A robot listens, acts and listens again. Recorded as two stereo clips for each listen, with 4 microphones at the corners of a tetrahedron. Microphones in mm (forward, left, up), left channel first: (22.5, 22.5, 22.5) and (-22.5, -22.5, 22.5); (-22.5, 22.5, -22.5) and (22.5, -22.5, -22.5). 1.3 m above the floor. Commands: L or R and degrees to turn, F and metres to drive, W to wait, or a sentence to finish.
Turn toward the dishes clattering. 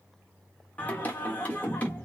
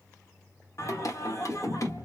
W
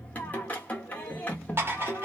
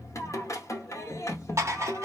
R85
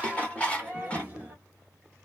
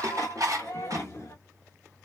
R25
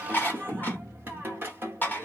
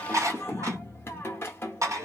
R15
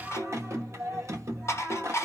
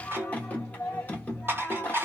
Facing the dishes clattering, 1 to 2 m away.